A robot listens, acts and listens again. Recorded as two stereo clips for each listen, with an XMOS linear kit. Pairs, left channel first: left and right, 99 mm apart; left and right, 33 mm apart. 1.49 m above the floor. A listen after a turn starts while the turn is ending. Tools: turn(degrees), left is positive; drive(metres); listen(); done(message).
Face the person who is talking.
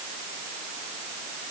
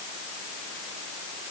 listen()
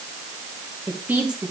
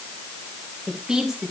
turn(degrees=-30)
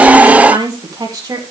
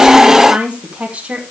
turn(degrees=-145)
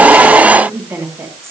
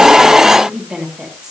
turn(degrees=-25)
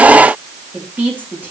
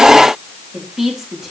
turn(degrees=-20)
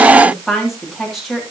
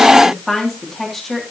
done("Facing the woman speaking.")